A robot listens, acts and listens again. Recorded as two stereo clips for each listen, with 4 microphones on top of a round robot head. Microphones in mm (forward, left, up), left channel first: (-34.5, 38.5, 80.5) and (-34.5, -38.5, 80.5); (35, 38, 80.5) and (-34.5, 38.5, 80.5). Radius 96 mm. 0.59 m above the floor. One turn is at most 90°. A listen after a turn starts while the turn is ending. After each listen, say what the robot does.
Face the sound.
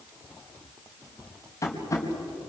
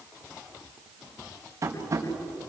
Turn 90° left.
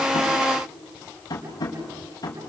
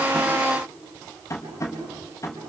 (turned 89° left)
Turn 45° left.
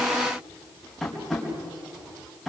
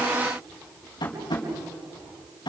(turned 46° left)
Facing the tapping.